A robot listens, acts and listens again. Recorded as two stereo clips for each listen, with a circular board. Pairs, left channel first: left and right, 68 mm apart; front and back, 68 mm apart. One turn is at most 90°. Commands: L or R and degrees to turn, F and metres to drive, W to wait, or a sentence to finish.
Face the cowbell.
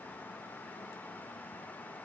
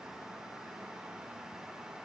W
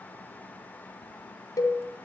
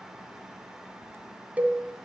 L90
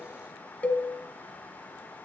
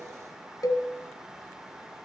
L20
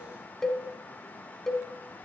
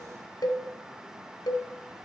Found it: a cowbell, straight ahead.